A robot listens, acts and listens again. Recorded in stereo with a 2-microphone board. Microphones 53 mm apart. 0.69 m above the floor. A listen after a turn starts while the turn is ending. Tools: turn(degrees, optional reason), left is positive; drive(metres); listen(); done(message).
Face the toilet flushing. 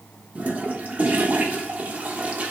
turn(degrees=-30, reason="The toilet flushing: about 30° right or 150° right.")
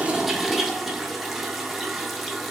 done("Found it: a toilet flushing, straight ahead.")